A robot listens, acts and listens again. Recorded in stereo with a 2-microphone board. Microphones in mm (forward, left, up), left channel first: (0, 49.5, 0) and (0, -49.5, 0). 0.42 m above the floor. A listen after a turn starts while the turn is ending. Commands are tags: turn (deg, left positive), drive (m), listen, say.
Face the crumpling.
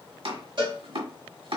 <listen/>
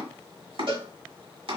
<listen/>
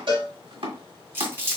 <turn deg="-25"/>
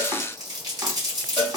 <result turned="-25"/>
<turn deg="-130"/>
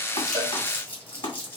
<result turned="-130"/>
<turn deg="25"/>
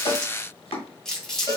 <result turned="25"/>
<say>Facing the crumpling.</say>